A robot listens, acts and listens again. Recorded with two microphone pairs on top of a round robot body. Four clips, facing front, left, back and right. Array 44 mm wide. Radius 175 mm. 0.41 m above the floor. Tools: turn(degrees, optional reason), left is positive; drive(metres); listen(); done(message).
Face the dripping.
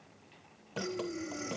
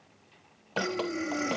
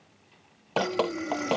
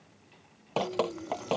turn(degrees=-160, reason="The dripping: 160° right.")
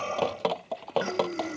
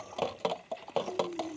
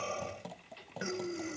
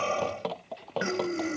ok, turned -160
turn(degrees=10, reason="The dripping is now 10° left.")
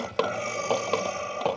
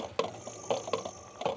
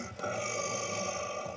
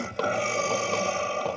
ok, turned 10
done("Found it: dripping, straight ahead.")